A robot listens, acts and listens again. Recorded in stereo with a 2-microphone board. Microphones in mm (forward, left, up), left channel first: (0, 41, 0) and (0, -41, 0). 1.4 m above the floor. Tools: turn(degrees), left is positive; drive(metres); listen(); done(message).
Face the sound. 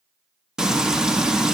turn(degrees=-30)
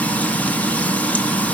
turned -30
turn(degrees=20)
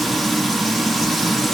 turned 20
done("Facing the frying, 1 to 2 m away.")